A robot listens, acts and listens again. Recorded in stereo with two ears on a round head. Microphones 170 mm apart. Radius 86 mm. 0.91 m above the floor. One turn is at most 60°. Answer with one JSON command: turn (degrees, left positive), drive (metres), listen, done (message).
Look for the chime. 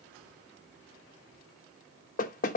{"listen": true}
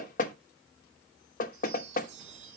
{"turn": -60}
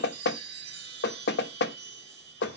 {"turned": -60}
{"turn": -60}
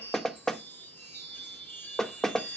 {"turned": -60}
{"turn": 10}
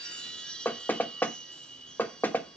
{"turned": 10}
{"done": "Found it: a chime, straight ahead."}